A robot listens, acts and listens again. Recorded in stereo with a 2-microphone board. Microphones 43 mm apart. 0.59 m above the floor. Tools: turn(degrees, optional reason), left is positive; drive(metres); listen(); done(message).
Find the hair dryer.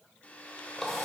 turn(degrees=35, reason="The hair dryer: about 35° left or 145° left.")
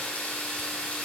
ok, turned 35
listen()
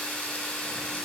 listen()
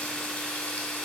done("I heard a hair dryer, but can't make it out now. It was about straight ahead or 110° left.")